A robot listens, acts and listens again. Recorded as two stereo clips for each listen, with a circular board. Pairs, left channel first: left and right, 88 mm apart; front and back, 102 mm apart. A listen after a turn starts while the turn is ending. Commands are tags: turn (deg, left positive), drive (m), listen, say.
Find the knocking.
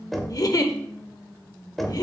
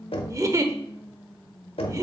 <say>Found it: knocking, straight ahead, 1 to 2 m away.</say>